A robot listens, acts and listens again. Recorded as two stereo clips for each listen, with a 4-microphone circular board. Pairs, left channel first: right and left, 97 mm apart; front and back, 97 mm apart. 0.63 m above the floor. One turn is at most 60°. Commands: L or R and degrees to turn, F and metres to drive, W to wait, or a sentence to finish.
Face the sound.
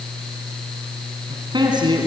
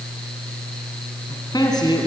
L45
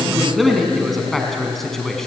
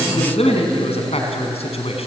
Found it: a man speaking, straight ahead.